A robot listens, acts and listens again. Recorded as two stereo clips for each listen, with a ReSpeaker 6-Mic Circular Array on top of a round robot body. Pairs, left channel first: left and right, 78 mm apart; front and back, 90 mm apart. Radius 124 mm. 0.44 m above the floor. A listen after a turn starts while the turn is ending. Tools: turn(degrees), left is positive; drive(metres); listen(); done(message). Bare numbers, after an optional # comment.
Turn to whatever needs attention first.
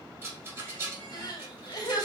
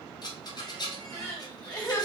# The crying: 65° left.
turn(65)
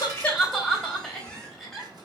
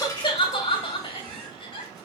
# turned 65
done("Facing the crying, 1 to 2 m away.")